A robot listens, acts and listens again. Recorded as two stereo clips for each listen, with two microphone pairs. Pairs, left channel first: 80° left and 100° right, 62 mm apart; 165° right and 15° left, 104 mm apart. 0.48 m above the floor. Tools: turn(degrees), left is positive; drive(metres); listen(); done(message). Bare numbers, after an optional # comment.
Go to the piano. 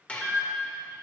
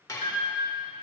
drive(1.0)
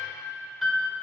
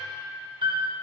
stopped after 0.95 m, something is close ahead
done("I am next to the piano.")